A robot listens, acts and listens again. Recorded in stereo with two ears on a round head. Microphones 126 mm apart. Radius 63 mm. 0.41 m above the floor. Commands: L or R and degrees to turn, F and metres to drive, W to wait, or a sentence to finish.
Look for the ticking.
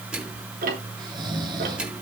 R65
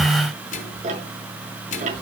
R55
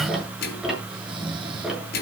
Facing the ticking, over 4 m away.